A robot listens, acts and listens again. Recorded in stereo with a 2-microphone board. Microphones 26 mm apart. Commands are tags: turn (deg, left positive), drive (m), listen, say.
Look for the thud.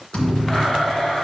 <turn deg="55"/>
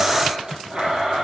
<listen/>
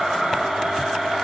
<say>I heard a thud, but can't make it out now. It was about straight ahead or 70° left.</say>